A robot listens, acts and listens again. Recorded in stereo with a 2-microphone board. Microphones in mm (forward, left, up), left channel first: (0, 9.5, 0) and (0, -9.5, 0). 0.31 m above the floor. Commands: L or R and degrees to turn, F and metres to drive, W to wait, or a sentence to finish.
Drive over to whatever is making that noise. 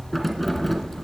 R30
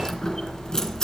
L25
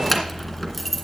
F1.0
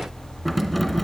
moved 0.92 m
F1.0
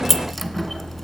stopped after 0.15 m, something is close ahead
Arrived at the keys jangling, straight ahead.